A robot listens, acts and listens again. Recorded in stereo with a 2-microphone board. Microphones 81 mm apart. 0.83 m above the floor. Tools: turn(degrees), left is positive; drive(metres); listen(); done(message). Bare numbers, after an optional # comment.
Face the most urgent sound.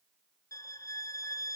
listen()
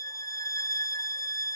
listen()
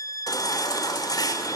# The baby crying: about 50° left or 130° left.
turn(50)
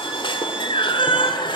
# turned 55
# So it is at 75° left.
turn(75)
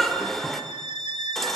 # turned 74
done("Facing the baby crying, 1 to 2 m away.")